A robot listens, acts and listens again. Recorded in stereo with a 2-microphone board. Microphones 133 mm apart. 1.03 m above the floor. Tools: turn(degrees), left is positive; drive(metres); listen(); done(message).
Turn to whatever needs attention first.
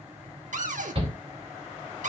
turn(degrees=-45)
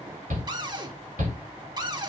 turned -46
turn(degrees=-85)
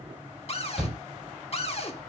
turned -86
done("Facing the shout, 2 to 4 m away.")